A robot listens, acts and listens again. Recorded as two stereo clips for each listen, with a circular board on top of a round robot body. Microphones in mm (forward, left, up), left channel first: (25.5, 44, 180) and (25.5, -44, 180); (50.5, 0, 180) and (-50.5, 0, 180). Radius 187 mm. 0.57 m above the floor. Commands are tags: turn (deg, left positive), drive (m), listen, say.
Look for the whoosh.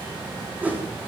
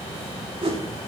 <turn deg="-160"/>
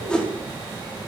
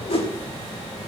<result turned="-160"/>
<turn deg="10"/>
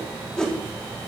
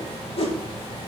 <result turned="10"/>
<turn deg="10"/>
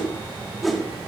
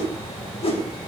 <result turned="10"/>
<say>Facing the whoosh.</say>